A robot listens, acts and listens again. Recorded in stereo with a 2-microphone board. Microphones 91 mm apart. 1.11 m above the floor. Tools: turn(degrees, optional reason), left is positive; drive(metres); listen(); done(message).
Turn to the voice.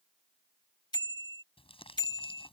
listen()
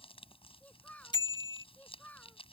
turn(degrees=15, reason="The child speaking: about 15° left or 165° left.")
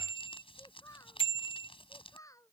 turn(degrees=35, reason="The child speaking: about 35° left or 145° left.")
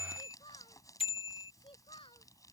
turn(degrees=105, reason="So it is at 105° left.")
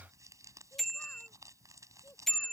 listen()
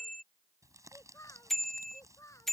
turn(degrees=35, reason="The child speaking is now 35° left.")
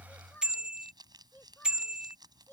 turn(degrees=20, reason="The child speaking is now 20° left.")
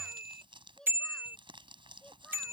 turn(degrees=10, reason="The child speaking is now 10° left.")
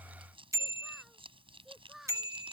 done("Found it: a child speaking, straight ahead.")